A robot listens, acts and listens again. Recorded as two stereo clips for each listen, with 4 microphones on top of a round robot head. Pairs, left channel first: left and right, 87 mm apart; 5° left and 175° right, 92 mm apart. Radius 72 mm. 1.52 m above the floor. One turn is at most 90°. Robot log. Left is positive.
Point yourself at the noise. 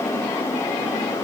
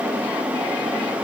cmd idle
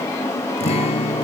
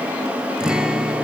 note: The guitar: 100° left.
cmd yaw +90
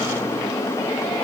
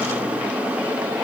note: Nothing new. It was at 10° left.
cmd yaw +10
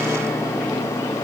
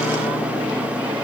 cmd idle
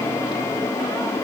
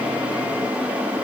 end: I heard a guitar from this way, but can't make it out now.